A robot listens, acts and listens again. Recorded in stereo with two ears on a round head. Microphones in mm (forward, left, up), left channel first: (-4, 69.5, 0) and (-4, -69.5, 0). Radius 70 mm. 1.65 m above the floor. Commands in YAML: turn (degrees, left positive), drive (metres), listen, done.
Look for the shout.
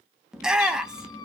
turn: -30
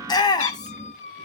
turn: 25
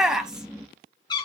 done: "Facing the shout, 1 to 2 m away."